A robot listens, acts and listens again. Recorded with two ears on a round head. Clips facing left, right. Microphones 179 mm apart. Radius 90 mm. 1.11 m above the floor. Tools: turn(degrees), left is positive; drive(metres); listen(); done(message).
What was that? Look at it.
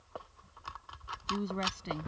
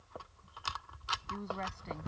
turn(degrees=40)
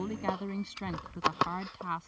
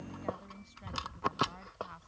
turn(degrees=100)
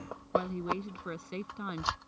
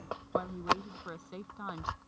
turn(degrees=30)
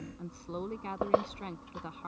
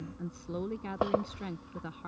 turn(degrees=-10)
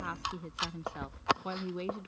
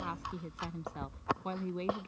done("Found it: a woman speaking, straight ahead.")